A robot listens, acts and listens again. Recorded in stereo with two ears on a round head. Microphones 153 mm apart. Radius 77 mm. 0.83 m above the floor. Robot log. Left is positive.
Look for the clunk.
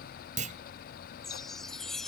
note: The clunk: about 45° right or 135° right.
cmd yaw -45
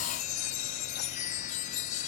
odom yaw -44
cmd idle
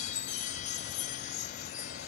end: I heard a clunk, but can't make it out now. It was about straight ahead or 90° right.